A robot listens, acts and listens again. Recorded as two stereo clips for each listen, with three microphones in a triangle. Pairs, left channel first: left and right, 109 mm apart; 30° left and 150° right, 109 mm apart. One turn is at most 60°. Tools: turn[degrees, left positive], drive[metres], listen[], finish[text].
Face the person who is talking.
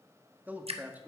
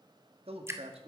Thought: The man speaking: 165° right.
Action: turn[-60]
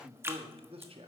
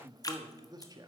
Thought: The man speaking is now 105° right.
Action: turn[-60]
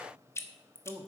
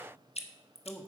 Thought: The man speaking is now 50° right.
Action: turn[-50]
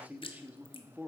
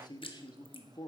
Thought: The man speaking is now 15° right.
Action: turn[-15]
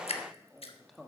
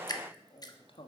Action: finish[Found it: a man speaking, straight ahead, 1 to 2 m away.]